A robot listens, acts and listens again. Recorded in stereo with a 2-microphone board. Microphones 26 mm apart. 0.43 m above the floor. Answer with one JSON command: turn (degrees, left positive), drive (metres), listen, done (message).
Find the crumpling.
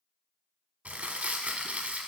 {"turn": -90}
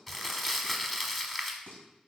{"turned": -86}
{"done": "Facing the crumpling, under 1 m away."}